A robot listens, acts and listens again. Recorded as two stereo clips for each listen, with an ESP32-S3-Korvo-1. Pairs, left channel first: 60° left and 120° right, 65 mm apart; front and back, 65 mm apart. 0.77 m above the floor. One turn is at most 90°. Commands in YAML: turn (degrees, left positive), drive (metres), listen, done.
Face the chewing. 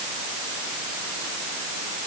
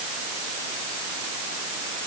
listen: true
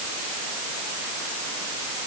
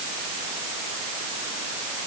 listen: true
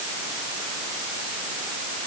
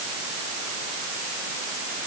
done: "I can't make out chewing."